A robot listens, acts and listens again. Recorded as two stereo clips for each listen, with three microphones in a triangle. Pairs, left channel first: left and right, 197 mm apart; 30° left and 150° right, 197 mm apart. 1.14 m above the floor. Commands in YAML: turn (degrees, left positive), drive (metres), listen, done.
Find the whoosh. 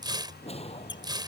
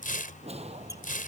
turn: 150
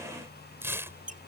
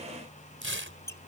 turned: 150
listen: true
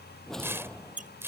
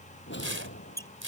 done: "Facing the whoosh."